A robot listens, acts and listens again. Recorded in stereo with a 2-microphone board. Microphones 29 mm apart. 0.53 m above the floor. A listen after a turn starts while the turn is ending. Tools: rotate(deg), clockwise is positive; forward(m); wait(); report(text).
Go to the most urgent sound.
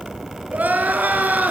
rotate(90)
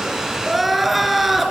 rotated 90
forward(1.0)
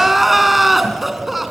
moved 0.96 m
forward(1.0)
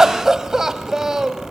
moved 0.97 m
rotate(20)
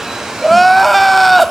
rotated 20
forward(1.0)
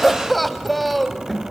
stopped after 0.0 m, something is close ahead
report("I am next to the crying.")